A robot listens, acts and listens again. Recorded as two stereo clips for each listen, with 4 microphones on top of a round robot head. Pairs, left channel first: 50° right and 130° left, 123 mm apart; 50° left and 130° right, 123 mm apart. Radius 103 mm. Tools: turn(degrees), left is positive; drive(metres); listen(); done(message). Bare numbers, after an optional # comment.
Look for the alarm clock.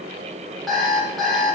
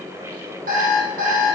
# The alarm clock: 140° right.
turn(-140)
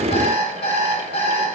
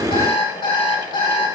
done("Facing the alarm clock.")